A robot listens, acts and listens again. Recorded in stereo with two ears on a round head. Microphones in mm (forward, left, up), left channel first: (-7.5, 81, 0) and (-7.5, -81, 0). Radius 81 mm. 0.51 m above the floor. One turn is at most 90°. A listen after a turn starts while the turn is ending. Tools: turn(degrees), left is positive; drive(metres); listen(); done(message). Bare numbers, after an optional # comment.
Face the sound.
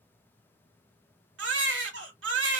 turn(-90)
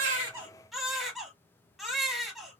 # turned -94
done("Facing the baby crying, under 1 m away.")